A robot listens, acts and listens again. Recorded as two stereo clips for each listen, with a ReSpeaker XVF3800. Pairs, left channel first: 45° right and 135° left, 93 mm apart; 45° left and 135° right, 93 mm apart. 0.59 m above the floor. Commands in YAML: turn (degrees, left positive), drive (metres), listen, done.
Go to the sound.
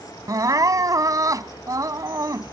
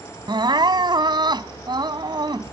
turn: -175
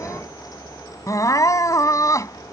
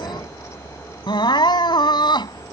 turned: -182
turn: 10
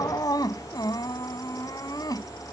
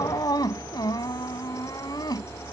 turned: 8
drive: 1.0
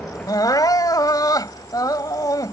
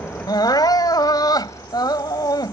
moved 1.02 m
drive: 1.0
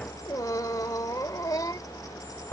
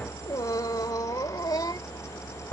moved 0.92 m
drive: 1.0
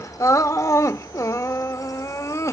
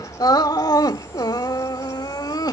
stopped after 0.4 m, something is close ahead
done: "I am next to the crying."